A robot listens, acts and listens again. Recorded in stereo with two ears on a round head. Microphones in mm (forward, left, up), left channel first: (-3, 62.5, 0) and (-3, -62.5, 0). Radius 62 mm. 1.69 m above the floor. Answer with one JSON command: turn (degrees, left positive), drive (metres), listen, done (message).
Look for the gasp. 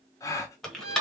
{"turn": 25}
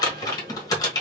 {"listen": true}
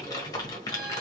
{"done": "I heard a gasp, but can't make it out now. It was about straight ahead or 130° left."}